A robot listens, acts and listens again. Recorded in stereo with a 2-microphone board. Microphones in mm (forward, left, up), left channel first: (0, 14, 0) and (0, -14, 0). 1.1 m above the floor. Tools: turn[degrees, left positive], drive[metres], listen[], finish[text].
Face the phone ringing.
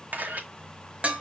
Action: listen[]
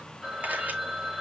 Action: turn[-30]
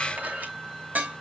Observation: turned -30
Action: listen[]
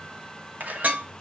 Action: listen[]
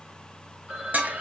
Thought: So it is at 145° right.
Action: turn[-145]
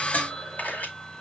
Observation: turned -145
Thought: The phone ringing is now 35° left.
Action: turn[35]
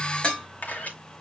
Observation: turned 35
Action: listen[]
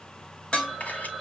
Action: finish[Facing the phone ringing.]